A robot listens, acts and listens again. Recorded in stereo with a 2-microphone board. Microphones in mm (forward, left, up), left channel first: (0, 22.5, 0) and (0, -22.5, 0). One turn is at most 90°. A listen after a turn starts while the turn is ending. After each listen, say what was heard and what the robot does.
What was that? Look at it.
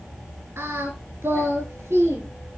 Turn 90° right.
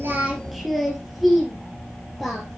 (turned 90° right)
Found it: singing, straight ahead, 2 to 4 m away.